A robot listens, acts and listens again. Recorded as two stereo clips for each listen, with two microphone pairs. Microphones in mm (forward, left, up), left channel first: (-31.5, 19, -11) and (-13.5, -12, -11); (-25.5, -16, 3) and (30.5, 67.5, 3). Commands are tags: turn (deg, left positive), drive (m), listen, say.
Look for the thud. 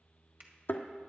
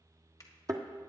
<turn deg="110"/>
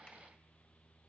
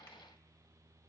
<say>I heard a thud from this way, but can't make it out now.</say>